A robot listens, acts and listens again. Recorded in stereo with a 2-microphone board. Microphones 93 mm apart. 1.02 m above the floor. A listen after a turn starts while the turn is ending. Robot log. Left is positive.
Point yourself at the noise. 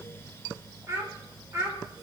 note: The child speaking: about 30° right or 150° right.
cmd yaw -30
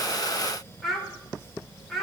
end: Found it: a child speaking, straight ahead, 2 to 4 m away.